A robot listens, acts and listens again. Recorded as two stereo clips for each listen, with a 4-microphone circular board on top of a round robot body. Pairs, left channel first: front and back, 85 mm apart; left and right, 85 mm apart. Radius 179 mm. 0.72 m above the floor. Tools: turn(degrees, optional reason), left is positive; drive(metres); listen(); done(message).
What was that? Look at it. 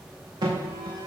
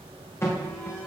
turn(degrees=150, reason="The alarm: 150° left.")
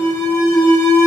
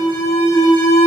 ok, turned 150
turn(degrees=45, reason="The alarm is now 45° left.")
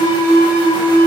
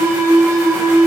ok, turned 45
turn(degrees=-35, reason="The alarm is now 35° right.")
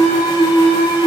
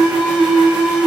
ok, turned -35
turn(degrees=-10, reason="The alarm is now 10° right.")
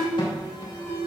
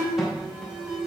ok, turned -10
done("Facing the alarm, 2 to 4 m away.")